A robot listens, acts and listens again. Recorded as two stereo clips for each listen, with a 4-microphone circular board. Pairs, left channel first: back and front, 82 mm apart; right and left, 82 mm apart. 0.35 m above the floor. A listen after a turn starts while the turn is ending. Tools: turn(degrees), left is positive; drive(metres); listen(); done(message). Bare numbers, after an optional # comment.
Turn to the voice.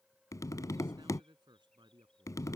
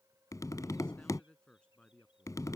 # The man speaking: 15° right.
turn(-15)
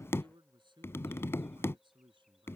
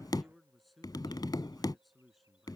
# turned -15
done("Facing the man speaking.")